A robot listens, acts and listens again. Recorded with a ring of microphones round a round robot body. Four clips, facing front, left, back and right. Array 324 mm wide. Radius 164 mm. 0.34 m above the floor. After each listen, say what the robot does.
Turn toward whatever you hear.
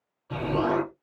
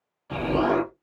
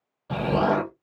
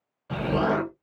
Turn 160° right.
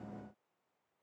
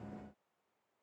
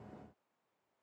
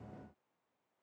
Facing where the explosion came from. I can't hear it now.